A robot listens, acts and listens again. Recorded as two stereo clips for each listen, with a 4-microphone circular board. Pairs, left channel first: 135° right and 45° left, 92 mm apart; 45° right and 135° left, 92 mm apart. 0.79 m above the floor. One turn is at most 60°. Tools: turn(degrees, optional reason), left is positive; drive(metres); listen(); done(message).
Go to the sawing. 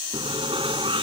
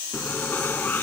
turn(degrees=25, reason="The sawing: 25° left.")
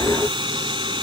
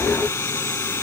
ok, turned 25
turn(degrees=15, reason="The sawing is now 15° left.")
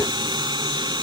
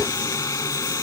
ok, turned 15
turn(degrees=10, reason="The sawing is now 10° left.")
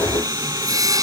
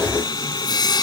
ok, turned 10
drive(metres=1.0)
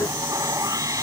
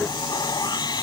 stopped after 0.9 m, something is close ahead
done("Something is in my way. I am facing the sawing but have not reached it.")